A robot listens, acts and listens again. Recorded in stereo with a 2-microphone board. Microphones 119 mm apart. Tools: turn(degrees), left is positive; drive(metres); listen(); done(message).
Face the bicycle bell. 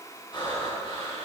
listen()
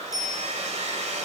turn(degrees=30)
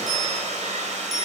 done("Found it: a bicycle bell, straight ahead, over 4 m away.")